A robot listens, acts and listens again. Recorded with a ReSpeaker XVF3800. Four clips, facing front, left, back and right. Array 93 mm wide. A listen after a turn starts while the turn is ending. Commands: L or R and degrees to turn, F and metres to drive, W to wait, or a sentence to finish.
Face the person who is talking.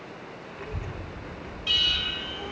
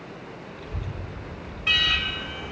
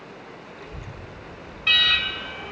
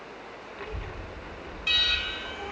R55
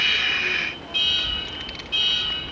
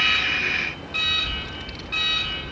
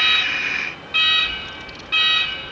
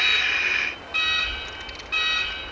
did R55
R15
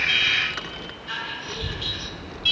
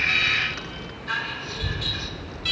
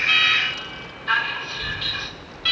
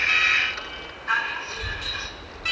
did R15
Facing the child speaking.